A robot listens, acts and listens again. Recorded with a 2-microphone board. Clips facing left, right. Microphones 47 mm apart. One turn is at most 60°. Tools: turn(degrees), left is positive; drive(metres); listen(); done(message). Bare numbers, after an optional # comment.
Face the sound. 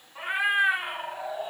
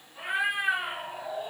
# The cat meowing: about 20° left or 160° left.
turn(20)
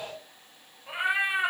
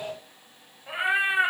# So it is at 25° right.
turn(-25)
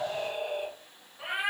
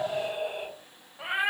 # The cat meowing is now 25° right.
turn(-25)
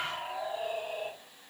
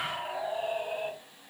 # The cat meowing is now 25° right.
turn(-25)
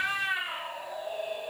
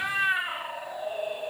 # The cat meowing is now 20° right.
turn(-20)
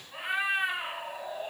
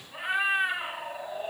done("Facing the cat meowing, 1 to 2 m away.")